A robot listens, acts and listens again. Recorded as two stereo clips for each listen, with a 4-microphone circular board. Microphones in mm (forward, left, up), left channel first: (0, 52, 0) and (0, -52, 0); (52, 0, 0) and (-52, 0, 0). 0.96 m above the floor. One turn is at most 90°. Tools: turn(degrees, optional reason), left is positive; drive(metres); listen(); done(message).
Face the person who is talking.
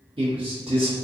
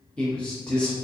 turn(degrees=-75, reason="The man speaking: 75° right.")
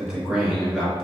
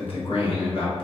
turn(degrees=-10, reason="The man speaking is now 10° right.")
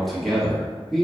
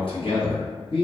done("Facing the man speaking.")